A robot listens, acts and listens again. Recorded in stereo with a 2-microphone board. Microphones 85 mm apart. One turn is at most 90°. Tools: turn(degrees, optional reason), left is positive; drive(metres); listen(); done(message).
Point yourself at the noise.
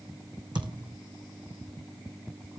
turn(degrees=-65, reason="The thud: about 65° right or 115° right.")
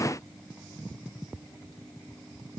listen()
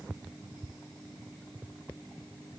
done("I heard a thud, but can't make it out now. It was about straight ahead or 50° right.")